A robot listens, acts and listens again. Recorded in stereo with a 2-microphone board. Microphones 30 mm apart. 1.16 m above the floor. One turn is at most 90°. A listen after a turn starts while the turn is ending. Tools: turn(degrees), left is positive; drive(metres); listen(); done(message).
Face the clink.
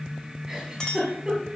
turn(degrees=25)
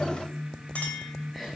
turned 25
turn(degrees=90)
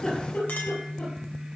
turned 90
turn(degrees=40)
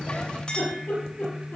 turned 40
turn(degrees=30)
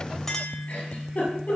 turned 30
turn(degrees=10)
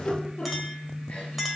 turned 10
done("Found it: a clink, straight ahead, 2 to 4 m away.")